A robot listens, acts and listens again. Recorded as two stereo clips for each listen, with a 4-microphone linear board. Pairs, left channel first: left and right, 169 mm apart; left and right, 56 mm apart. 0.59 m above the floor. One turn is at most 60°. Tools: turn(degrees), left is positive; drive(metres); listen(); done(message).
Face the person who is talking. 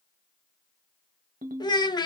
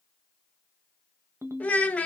turn(degrees=25)
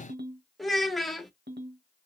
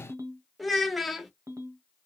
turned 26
done("Found it: a child speaking, straight ahead.")